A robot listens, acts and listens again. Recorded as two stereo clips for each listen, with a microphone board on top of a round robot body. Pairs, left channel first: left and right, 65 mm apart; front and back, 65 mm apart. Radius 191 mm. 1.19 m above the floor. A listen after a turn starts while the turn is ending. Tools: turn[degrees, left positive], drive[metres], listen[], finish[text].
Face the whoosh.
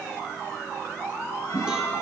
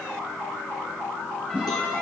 Thought: The whoosh: 110° left.
Action: turn[110]
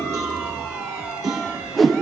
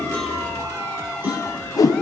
Action: finish[Facing the whoosh.]